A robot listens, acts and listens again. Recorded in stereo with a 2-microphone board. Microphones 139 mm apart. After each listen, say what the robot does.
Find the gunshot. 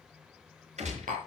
Turn 55° right.
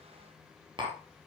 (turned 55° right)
Keep listening.
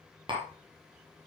I heard a gunshot, but can't make it out now. It was about straight ahead or 70° right.